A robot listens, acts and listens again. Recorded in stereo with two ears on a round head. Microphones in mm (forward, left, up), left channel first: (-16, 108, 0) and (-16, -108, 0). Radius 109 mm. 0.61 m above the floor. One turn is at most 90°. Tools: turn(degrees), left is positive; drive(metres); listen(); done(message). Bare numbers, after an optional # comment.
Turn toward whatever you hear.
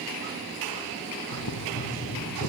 turn(90)
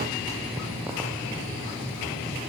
# So it is at 10° right.
turn(-10)
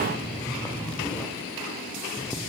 done("Found it: boiling, straight ahead, 2 to 4 m away.")